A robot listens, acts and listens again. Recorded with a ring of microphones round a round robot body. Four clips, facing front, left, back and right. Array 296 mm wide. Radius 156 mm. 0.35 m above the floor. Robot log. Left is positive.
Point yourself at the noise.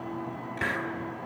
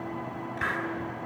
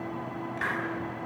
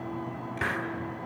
note: The hiss: 45° right.
cmd yaw -45
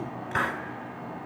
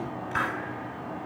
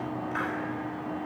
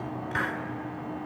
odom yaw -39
note: The hiss is now 10° right.
cmd yaw -10
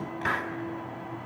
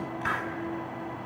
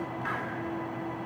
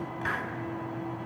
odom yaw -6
end: Facing the hiss, 1 to 2 m away.